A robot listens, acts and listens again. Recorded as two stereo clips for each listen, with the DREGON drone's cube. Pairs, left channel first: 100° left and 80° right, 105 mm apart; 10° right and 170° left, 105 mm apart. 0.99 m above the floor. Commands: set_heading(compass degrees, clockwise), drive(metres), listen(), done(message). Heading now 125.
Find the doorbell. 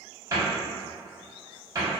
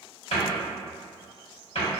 listen()
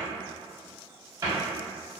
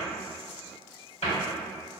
listen()
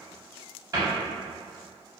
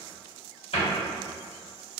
done("I can't make out a doorbell to turn to.")